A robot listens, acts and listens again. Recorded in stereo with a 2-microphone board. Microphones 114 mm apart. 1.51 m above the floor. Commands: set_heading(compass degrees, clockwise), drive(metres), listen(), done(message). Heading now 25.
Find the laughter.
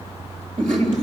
set_heading(115)
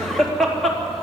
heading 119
done("Found it: laughter, straight ahead.")